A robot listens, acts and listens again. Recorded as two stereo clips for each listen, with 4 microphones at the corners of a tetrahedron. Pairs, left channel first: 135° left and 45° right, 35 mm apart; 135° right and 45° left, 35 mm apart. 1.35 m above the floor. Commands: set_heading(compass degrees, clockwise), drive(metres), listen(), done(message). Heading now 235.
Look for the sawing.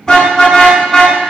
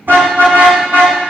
listen()
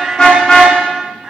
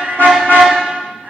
listen()
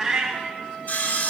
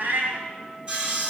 set_heading(135)
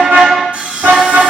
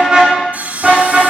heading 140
done("Facing the sawing, 2 to 4 m away.")